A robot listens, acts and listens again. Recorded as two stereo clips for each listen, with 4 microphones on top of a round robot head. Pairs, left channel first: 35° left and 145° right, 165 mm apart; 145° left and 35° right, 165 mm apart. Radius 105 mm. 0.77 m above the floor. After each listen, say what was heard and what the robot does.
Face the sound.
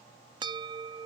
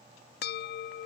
The bell: 155° left. Turn 155° left.
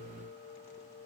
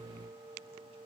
The bell is now 35° left. Turn 35° left.
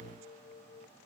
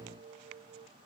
Facing the bell.